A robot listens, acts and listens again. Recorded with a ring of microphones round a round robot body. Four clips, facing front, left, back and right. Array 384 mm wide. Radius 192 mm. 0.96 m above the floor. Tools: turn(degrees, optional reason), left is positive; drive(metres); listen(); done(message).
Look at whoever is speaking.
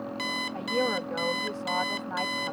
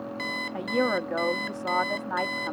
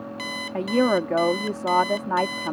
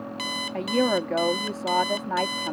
turn(degrees=-170, reason="The woman speaking: 170° right.")
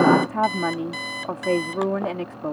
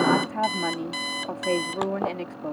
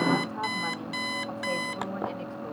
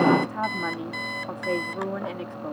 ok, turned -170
turn(degrees=10, reason="The woman speaking is now 10° left.")
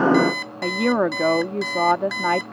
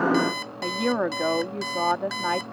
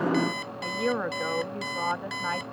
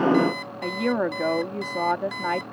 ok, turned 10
done("Facing the woman speaking.")